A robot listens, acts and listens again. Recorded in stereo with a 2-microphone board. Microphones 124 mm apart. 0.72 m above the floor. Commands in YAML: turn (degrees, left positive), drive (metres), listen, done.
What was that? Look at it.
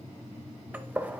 turn: -30
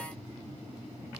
listen: true
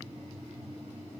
done: "I heard a gunshot, but can't make it out now. It was about 15° left or 135° right."